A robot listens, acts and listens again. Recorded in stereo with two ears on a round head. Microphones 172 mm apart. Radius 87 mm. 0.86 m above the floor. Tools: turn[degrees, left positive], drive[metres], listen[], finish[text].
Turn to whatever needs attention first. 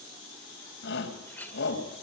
Thought: The shout: about 65° left or 115° left.
Action: turn[65]
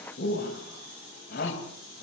Thought: So it is at 50° left.
Action: turn[50]
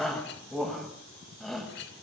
Action: finish[Facing the shout, over 4 m away.]